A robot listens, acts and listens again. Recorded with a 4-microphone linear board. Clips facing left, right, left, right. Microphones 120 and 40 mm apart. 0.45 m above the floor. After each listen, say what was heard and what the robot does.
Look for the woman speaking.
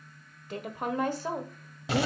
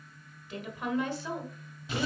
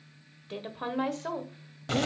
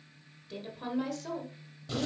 The woman speaking: about 40° left or 140° left. Turn 40° left.
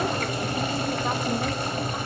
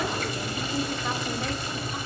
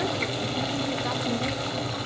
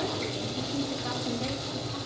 Keep listening.
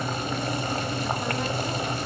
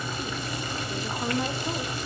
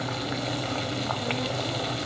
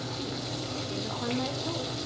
Keep listening.
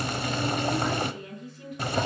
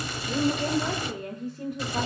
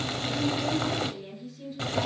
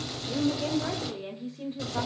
So it is at 45° right. Turn 45° right.
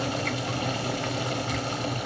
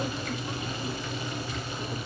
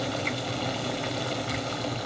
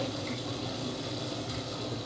Keep listening.
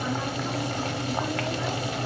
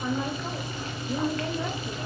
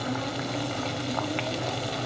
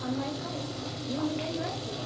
Keep listening.
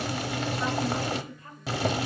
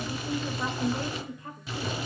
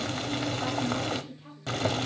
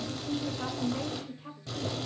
The woman speaking is now 20° right. Turn 20° right.
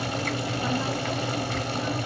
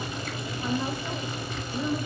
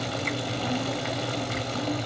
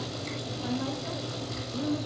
Keep listening.
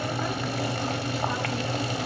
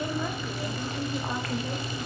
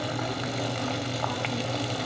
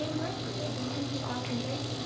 Keep listening.
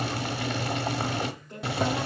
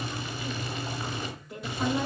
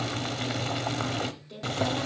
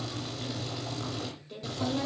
Facing the woman speaking.